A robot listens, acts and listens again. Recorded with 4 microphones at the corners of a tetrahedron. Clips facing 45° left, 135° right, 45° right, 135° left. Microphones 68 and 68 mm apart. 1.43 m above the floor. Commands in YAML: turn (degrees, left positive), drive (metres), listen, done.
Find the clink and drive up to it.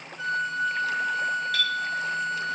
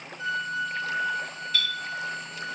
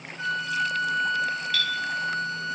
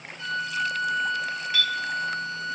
turn: 65
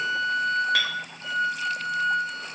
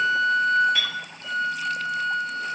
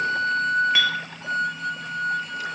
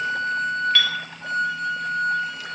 turn: 30
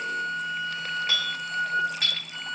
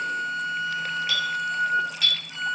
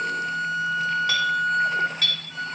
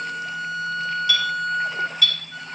drive: 1.0
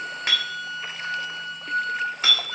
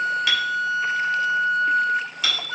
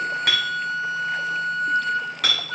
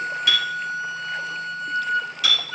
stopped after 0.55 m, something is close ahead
turn: -10
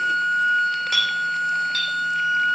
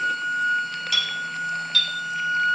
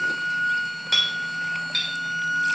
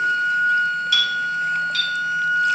done: "Blocked. The clink is further on, straight ahead."